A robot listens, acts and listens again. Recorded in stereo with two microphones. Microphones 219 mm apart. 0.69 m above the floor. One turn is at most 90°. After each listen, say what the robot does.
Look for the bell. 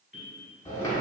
Turn 60° left.
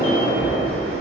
Keep listening.
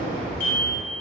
Facing the bell, 1 to 2 m away.